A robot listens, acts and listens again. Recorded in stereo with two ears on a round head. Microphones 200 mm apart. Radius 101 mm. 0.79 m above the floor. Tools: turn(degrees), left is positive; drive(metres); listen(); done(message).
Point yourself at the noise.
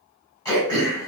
turn(degrees=30)
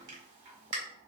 turn(degrees=-15)
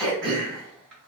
done("Facing the throat clearing.")